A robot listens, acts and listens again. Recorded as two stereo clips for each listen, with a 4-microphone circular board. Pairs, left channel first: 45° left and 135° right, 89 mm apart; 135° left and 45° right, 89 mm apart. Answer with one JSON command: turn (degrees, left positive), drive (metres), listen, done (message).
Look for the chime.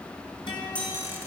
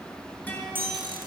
{"turn": -30}
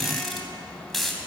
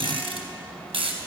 {"listen": true}
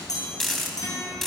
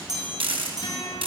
{"done": "Facing the chime, over 4 m away."}